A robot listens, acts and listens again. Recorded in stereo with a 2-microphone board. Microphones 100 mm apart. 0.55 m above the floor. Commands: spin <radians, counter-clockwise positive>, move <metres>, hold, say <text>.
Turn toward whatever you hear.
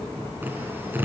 spin -0.35
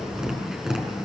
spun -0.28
say Found it: tapping, straight ahead, over 4 m away.